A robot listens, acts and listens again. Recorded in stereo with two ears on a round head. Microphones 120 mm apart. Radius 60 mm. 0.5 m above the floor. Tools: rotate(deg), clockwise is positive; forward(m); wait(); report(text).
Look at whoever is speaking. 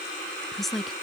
rotate(-30)
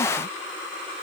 wait()
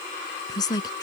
rotate(-150)
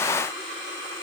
wait()
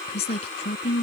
rotate(-50)
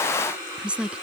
rotate(10)
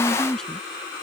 report("Found it: a woman speaking, straight ahead.")